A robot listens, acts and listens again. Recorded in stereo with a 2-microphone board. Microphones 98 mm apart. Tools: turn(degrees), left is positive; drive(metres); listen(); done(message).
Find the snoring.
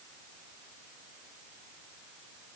listen()
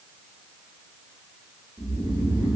turn(degrees=-55)
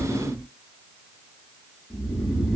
turn(degrees=-10)
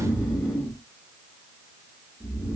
done("Found it: snoring, straight ahead, 1 to 2 m away.")